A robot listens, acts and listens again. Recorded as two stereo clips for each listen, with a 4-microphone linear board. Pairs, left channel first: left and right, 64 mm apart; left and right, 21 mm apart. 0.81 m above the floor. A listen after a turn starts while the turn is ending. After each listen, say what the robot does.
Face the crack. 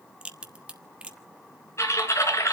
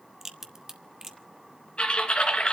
Turn 15° right.
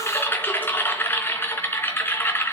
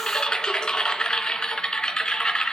Keep listening.
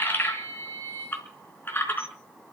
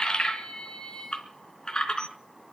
I heard a crack, but can't make it out now. It was about straight ahead or 150° right.